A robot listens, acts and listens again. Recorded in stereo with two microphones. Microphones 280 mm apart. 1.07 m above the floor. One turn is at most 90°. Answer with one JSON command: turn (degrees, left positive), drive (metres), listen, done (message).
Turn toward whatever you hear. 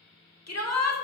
{"turn": 65}
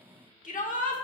{"turn": 30}
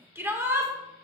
{"turn": -10}
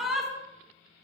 {"done": "Found it: a shout, straight ahead."}